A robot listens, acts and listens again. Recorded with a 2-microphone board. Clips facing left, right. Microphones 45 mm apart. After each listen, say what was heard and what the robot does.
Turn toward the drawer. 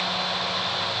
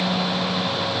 Keep listening.
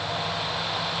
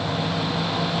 Keep listening.
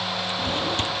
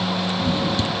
The drawer: about 45° left or 135° left. Turn 45° left.
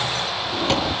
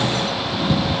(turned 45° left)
So it is at 85° left. Turn 85° left.
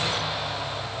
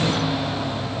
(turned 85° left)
Keep listening.
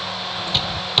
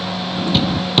Found it: a drawer, straight ahead.